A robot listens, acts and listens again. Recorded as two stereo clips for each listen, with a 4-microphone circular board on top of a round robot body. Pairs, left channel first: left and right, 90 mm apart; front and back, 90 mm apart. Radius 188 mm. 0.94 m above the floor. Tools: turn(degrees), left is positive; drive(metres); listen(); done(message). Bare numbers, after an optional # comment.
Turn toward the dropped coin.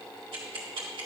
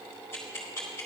listen()
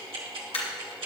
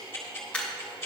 # The dropped coin: 75° left.
turn(75)
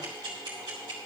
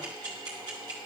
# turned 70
done("Facing where the dropped coin came from. I can't hear it now.")